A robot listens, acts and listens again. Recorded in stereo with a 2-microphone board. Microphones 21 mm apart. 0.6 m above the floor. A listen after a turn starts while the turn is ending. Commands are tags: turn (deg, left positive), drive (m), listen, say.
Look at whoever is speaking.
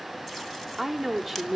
<turn deg="-30"/>
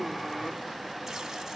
<listen/>
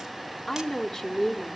<turn deg="25"/>
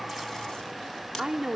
<turn deg="-30"/>
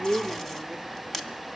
<listen/>
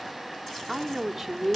<say>Found it: a woman speaking, straight ahead.</say>